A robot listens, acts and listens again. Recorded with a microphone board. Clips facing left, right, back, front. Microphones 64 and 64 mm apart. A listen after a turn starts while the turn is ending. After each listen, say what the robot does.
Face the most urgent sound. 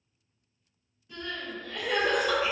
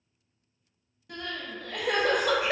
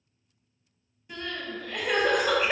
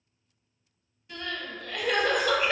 Turn 100° right.
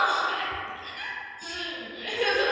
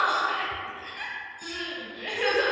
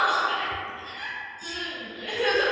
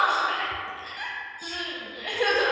Turn 25° right.
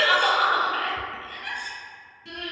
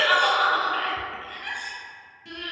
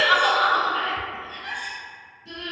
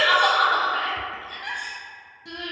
Facing the crying.